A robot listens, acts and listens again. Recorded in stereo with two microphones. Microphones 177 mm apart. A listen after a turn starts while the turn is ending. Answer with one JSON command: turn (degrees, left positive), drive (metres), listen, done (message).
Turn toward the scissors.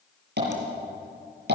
{"listen": true}
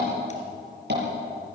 {"listen": true}
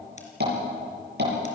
{"done": "I can't make out scissors to turn to."}